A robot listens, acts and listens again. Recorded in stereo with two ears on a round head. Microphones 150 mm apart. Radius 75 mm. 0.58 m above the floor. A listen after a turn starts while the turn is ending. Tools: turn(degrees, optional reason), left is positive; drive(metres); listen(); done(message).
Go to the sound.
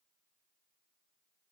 listen()
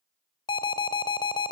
turn(degrees=30, reason="The alarm: about 30° left or 150° left.")
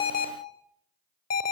turn(degrees=120, reason="So it is at 120° left.")
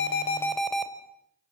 drive(metres=1.0)
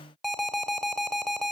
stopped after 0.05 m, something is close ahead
done("Something is in my way. I am facing the alarm but have not reached it.")